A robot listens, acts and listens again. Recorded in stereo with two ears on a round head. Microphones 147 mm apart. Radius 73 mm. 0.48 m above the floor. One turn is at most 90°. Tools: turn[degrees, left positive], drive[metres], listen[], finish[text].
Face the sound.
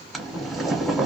Action: turn[30]
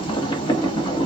Thought: So it is at 150° left.
Action: turn[90]
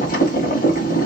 Thought: The boiling is now 55° left.
Action: turn[55]
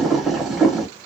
Action: finish[Facing the boiling.]